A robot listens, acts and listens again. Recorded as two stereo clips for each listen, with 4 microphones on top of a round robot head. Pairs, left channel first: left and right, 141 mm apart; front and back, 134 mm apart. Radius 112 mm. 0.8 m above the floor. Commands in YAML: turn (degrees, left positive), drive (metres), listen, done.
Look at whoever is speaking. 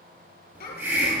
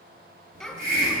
turn: 90
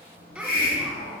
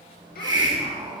listen: true
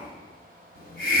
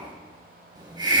listen: true
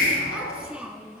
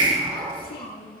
done: "Facing the child speaking, over 4 m away."